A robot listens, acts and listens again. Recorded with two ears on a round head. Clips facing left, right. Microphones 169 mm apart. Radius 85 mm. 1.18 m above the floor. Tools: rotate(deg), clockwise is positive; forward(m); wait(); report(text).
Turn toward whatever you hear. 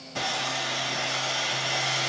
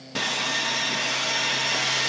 rotate(70)
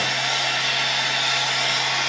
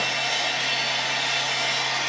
report("Facing the sawing.")